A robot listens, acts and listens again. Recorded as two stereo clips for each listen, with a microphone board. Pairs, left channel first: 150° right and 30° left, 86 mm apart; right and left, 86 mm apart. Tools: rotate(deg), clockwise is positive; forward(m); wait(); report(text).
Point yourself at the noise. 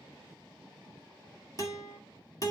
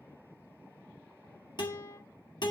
rotate(110)
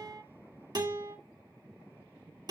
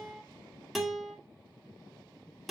report("Facing the guitar.")